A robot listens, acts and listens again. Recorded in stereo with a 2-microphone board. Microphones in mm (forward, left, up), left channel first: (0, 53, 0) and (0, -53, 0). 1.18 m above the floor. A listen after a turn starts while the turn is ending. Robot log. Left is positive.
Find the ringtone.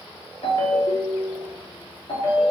note: The ringtone: about 60° left or 120° left.
cmd yaw +60
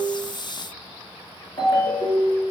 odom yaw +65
note: So it is at 55° left.
cmd yaw +55
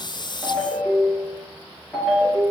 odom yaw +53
end: Found it: a ringtone, straight ahead, 1 to 2 m away.